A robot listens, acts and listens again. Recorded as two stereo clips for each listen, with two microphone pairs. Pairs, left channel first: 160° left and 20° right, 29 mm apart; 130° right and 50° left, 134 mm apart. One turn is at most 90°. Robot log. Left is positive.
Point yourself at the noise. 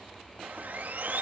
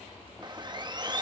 note: The sawing: 10° right.
cmd yaw -10
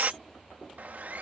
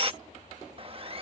end: Found it: sawing, straight ahead.